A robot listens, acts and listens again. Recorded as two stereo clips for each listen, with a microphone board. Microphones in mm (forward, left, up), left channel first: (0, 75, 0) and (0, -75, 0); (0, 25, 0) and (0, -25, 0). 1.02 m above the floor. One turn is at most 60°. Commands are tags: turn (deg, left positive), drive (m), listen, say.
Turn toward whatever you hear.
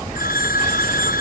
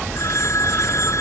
<turn deg="60"/>
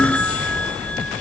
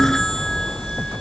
<say>Found it: a phone ringing, straight ahead.</say>